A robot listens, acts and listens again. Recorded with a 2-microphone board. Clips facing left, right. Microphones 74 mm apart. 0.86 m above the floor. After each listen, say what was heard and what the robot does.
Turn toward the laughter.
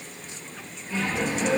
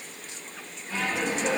The laughter: about 55° right or 125° right. Turn 55° right.
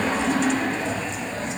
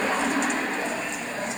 So it is at 15° right. Turn 15° right.
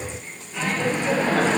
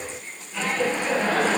The laughter is now 15° left. Turn 15° left.
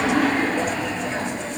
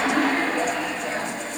The laughter is now 15° left. Turn 15° left.
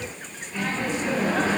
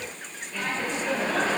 The laughter is now 10° left. Turn 10° left.
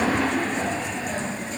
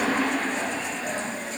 Found it: laughter, straight ahead.